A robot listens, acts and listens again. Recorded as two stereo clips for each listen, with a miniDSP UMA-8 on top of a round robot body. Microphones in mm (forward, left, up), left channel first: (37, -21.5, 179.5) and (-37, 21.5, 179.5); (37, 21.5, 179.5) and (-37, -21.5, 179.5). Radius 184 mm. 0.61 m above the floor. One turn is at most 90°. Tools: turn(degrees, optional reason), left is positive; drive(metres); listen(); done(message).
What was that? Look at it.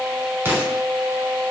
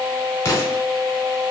turn(degrees=85, reason="The explosion: 85° left.")
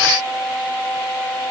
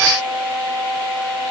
done("I heard an explosion from this way, but can't make it out now.")